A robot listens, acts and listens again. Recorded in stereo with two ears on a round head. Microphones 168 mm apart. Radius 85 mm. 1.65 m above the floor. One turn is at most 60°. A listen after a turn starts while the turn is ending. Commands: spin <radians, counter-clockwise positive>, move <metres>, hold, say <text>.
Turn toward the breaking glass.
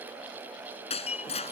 spin 0.61
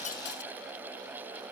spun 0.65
hold
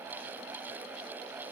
say I heard breaking glass, but can't make it out now. It was about 5° right or 110° left.